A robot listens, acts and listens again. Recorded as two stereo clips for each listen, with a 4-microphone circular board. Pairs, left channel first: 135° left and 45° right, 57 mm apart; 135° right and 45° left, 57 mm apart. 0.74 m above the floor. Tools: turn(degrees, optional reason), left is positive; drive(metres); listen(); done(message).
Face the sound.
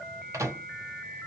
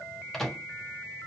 turn(degrees=-50, reason="The microwave: 50° right.")
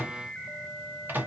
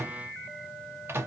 done("Found it: a microwave, straight ahead.")